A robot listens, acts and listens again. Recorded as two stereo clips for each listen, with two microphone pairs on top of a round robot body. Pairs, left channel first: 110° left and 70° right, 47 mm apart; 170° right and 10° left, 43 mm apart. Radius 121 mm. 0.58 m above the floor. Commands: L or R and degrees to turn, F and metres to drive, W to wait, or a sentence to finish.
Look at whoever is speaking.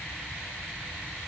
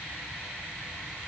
W
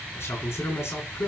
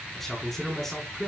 L105
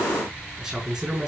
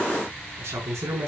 L10
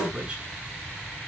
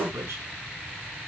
Facing the man speaking, over 4 m away.